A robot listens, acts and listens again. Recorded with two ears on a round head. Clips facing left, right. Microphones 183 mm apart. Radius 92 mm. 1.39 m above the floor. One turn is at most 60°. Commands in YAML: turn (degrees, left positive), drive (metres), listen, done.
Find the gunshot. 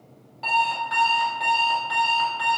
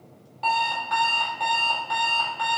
listen: true
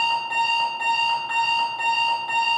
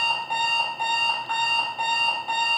listen: true
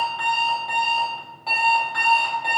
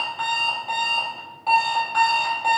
done: "I can't make out a gunshot to turn to."